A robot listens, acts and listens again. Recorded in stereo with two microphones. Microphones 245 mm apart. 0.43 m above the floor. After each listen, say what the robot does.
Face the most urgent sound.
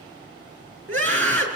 Turn 55° right.
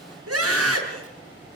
Turn 70° right.
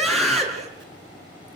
Found it: a scream, straight ahead, over 4 m away.